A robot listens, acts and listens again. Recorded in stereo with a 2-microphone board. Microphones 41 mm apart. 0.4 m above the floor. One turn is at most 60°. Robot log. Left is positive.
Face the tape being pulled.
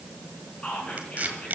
note: The tape being pulled: about 35° right or 145° right.
cmd yaw -35
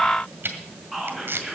note: So it is at 105° right.
cmd yaw -60
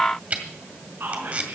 note: The tape being pulled is now 40° right.
cmd yaw -40
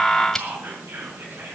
note: The tape being pulled is now 10° left.
cmd yaw +10
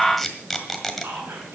end: Found it: tape being pulled, straight ahead, 1 to 2 m away.